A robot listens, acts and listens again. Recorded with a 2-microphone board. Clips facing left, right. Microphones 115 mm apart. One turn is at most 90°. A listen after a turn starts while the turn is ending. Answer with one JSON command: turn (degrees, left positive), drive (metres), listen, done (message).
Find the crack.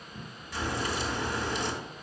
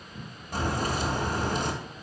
{"turn": -50}
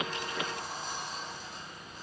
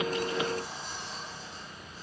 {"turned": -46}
{"listen": true}
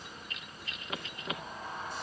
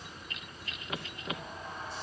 {"done": "I heard a crack, but can't make it out now. It was about 5° right or 85° right."}